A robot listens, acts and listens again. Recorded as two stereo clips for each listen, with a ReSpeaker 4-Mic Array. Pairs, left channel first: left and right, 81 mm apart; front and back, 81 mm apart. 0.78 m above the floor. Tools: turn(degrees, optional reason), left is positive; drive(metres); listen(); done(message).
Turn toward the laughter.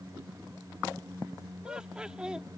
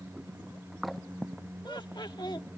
turn(degrees=-10, reason="The laughter: 10° right.")
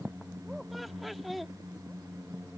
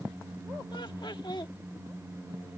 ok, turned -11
done("Facing the laughter.")